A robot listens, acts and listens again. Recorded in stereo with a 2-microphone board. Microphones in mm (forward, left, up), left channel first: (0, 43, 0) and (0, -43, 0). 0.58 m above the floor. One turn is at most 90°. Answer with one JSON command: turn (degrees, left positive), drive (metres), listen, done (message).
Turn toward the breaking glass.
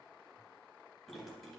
{"listen": true}
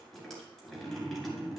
{"listen": true}
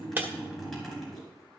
{"turn": -20}
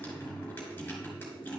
{"listen": true}
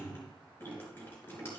{"done": "I heard breaking glass, but can't make it out now. It was about straight ahead or 140° right."}